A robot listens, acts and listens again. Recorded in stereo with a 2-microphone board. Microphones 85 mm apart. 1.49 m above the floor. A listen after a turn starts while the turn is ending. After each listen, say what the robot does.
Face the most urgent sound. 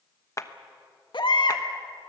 Turn 70° left.
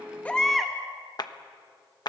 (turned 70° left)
Facing the baby crying.